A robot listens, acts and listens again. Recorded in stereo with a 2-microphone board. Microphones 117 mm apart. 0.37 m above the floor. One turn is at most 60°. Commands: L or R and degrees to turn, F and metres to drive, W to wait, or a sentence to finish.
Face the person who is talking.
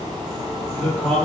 L30
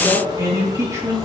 R25
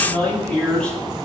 Facing the man speaking, over 4 m away.